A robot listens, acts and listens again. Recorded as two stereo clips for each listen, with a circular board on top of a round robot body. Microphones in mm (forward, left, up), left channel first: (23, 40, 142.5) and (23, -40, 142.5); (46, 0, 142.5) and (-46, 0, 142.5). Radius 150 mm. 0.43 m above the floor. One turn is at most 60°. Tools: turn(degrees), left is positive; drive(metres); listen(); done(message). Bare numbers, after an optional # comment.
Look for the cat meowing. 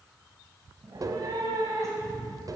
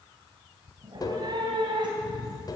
# The cat meowing: 145° right.
turn(-60)
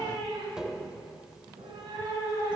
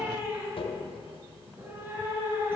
# The cat meowing is now 115° right.
turn(-60)
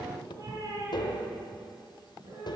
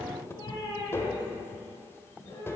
# The cat meowing is now 45° right.
turn(-45)
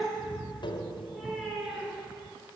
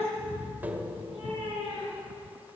done("Facing the cat meowing.")